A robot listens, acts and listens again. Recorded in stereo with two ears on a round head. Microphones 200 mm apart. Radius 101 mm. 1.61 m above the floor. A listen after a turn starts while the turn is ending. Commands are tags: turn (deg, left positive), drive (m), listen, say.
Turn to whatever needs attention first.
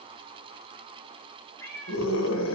<turn deg="60"/>
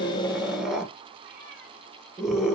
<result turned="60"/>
<say>Facing the scream.</say>